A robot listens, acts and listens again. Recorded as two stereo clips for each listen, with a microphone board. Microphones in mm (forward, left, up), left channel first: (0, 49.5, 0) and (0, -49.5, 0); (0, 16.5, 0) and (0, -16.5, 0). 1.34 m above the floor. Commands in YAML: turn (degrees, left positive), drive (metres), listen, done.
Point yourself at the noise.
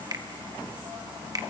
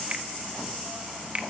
turn: -40
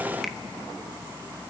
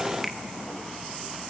listen: true
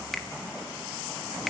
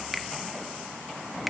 done: "Facing the finger snap, 1 to 2 m away."